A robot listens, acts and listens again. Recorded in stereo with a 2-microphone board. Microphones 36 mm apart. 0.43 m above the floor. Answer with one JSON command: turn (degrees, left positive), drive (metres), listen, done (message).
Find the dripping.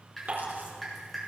{"turn": 30}
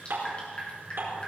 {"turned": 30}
{"turn": 145}
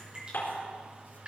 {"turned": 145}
{"turn": -30}
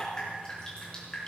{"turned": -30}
{"turn": 20}
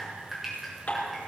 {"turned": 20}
{"done": "Found it: dripping, straight ahead, over 4 m away."}